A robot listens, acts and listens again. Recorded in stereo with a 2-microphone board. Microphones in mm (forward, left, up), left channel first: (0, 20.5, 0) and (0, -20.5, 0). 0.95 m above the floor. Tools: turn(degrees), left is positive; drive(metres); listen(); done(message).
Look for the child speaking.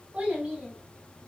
turn(degrees=-35)
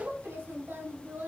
turn(degrees=-105)
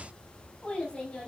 turn(degrees=30)
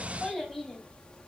done("Facing the child speaking, over 4 m away.")